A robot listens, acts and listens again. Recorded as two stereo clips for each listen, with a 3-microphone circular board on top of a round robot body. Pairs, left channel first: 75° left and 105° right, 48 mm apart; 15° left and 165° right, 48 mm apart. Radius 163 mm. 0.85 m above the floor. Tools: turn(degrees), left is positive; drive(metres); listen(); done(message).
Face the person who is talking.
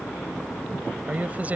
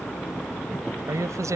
turn(degrees=-165)
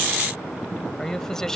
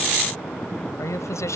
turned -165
done("Found it: a man speaking, straight ahead.")